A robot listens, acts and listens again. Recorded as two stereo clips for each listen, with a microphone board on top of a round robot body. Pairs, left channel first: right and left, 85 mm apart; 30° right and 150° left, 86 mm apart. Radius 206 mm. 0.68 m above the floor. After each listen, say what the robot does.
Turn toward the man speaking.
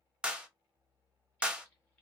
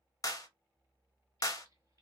Keep listening.
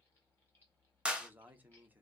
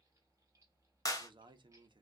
Turn 160° left.
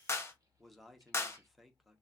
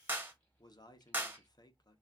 Found it: a man speaking, straight ahead, under 1 m away.